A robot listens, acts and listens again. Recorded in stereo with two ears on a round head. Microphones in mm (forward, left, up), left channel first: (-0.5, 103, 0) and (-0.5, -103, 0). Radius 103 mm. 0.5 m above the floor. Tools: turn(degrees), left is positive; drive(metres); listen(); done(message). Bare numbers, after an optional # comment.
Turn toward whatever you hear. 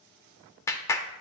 turn(30)
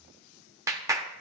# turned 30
# So it is at 15° right.
turn(-15)
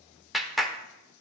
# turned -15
done("Found it: a clap, straight ahead, under 1 m away.")